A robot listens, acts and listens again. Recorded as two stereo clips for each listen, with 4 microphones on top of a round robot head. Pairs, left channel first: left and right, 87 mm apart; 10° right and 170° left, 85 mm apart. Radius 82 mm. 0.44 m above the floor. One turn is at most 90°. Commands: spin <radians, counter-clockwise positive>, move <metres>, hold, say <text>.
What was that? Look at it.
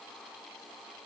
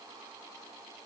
hold
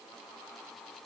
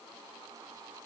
hold
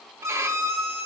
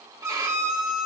spin -1.57
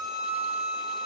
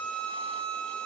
spin -0.79
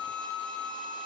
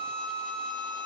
spin 0.17
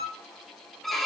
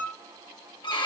say Found it: a violin, straight ahead, 1 to 2 m away.